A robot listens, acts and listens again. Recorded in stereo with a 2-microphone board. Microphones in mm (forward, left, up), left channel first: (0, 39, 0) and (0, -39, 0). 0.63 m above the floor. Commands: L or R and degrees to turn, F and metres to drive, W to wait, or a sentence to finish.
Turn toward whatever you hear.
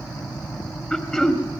L30
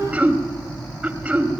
R20
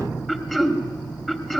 Facing the throat clearing.